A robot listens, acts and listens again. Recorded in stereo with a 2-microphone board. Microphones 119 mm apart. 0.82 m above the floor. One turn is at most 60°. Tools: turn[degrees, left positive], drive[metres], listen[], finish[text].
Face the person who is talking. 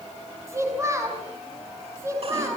Thought: The child speaking: about 25° right or 155° right.
Action: turn[-25]
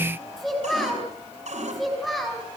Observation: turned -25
Action: finish[Found it: a child speaking, straight ahead.]